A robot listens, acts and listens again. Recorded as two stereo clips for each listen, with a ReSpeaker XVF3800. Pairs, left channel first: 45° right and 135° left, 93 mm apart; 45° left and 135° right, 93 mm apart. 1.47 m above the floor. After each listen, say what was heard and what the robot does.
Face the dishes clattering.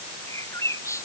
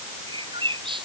Keep listening.
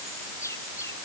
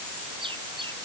Keep listening.
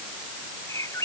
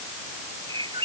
I can't make out dishes clattering to turn to.